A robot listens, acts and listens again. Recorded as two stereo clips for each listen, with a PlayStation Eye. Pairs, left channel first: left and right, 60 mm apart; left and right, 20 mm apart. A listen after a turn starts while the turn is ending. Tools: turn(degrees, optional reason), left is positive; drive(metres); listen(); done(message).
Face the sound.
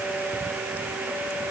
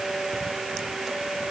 listen()
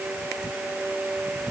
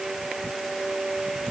listen()
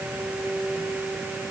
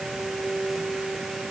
done("I can't make out anything to turn to.")